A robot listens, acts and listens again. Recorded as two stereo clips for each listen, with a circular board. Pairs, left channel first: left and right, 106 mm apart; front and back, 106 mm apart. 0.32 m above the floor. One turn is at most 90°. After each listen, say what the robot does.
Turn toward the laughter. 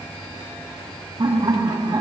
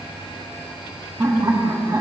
Turn 90° right.
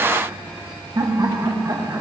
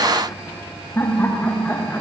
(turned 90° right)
Turn 60° right.
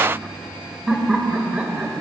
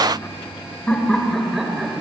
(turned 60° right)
Turn 90° right.
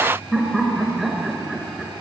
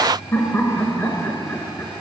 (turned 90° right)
Facing the laughter.